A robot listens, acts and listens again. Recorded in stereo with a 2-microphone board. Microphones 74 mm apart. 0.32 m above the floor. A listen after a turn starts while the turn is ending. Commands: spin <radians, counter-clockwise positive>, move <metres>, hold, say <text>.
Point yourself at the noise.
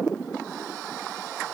hold
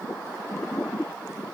hold
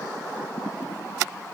say I can't make out anything.